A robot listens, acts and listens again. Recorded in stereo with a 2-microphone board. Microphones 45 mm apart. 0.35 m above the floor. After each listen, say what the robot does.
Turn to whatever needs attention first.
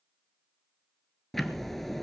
Keep listening.
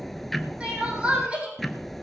Turn 25° right.
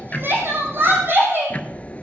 Turn 125° right.
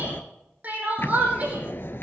Turn 30° right.
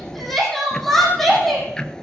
Facing the crying, over 4 m away.